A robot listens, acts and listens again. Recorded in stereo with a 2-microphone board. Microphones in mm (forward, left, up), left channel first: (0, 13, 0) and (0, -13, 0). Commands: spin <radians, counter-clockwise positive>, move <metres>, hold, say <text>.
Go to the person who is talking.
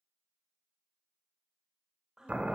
spin -0.44
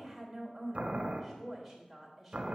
move 1.0
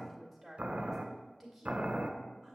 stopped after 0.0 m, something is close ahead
say Something is in my way. I am facing the woman speaking but have not reached it.